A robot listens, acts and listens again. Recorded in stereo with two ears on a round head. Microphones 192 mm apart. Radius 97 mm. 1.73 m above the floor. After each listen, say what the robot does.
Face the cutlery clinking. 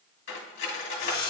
Turn 60° left.
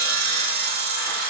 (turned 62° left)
Keep listening.
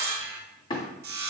Turn 30° left.
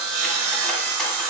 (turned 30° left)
Keep listening.
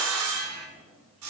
Keep listening.
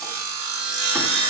I heard cutlery clinking from this way, but can't make it out now.